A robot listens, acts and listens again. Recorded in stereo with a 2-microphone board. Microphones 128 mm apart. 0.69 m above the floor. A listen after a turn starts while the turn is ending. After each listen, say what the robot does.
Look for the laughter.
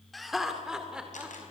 Turn 30° right.
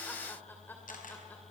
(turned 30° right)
Turn 15° left.
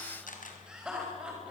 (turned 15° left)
Turn 10° right.
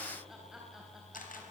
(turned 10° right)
Keep listening.
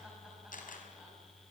Keep listening.
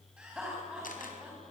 Facing the laughter.